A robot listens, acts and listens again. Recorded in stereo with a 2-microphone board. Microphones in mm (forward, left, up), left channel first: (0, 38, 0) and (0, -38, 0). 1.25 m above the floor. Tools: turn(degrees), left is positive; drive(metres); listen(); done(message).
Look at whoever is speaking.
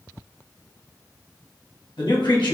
turn(degrees=90)
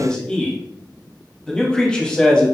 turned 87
turn(degrees=15)
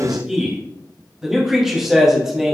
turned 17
done("Found it: a man speaking, straight ahead, 1 to 2 m away.")